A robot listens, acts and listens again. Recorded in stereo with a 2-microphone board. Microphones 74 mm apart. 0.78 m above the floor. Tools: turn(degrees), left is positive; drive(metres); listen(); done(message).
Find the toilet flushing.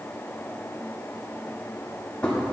listen()
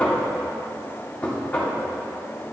listen()
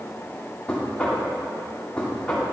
done("I can't make out a toilet flushing to turn to.")